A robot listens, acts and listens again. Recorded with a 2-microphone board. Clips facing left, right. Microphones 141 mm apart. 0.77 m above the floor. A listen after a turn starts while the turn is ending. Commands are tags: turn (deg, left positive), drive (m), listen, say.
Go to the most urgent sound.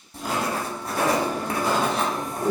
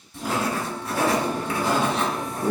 <turn deg="-35"/>
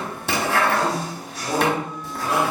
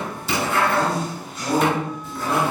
<turn deg="-105"/>
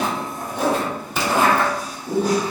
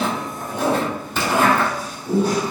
<turn deg="-10"/>
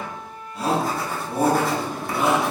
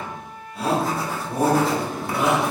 <drive m="1.0"/>
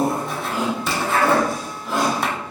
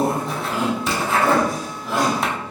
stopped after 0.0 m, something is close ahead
<say>Blocked. The shout is further on, straight ahead.</say>